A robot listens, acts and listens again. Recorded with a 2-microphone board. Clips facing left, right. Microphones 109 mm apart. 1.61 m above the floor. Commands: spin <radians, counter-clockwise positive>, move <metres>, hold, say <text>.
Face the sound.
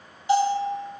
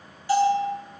spin 0.35
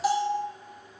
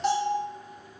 say Found it: a bell, straight ahead.